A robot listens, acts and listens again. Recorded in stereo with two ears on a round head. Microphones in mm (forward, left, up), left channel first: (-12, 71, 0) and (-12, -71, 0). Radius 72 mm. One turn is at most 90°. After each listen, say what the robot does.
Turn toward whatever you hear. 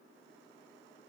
Keep listening.
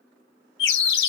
Turn 90° left.
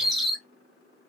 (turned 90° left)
Found it: a bird, straight ahead, under 1 m away.